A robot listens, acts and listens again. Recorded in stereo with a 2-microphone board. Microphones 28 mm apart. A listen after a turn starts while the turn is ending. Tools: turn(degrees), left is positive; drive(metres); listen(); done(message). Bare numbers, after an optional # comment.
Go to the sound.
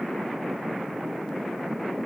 listen()
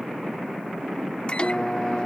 # The microwave: about 35° left or 145° left.
turn(35)
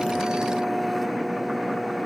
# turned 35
drive(1.0)
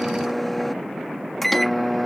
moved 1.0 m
drive(1.0)
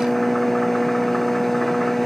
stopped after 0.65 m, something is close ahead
# The microwave is now 10° left.
turn(10)
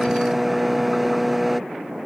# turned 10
done("I am next to the microwave.")